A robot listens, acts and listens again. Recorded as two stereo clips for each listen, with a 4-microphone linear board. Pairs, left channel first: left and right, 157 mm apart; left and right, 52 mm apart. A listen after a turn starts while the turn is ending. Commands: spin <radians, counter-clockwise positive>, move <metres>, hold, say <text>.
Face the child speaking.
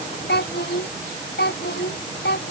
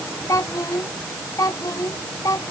spin 1.57
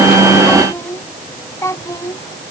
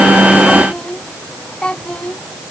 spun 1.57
spin 0.35
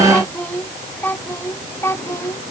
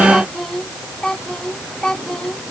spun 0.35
spin 0.26
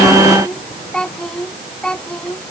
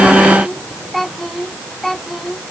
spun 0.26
say Found it: a child speaking, straight ahead.